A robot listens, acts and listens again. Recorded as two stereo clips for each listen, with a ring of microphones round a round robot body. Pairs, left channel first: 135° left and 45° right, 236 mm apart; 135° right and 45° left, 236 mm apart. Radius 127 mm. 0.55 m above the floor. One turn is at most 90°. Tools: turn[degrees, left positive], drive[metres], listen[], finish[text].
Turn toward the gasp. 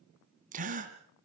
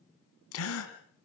Thought: The gasp: 105° right.
Action: turn[-90]
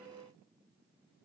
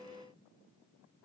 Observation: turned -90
Thought: Nothing new. It was at 15° right.
Action: turn[-15]
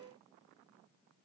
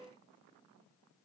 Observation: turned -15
Action: finish[Facing where the gasp came from. I can't hear it now.]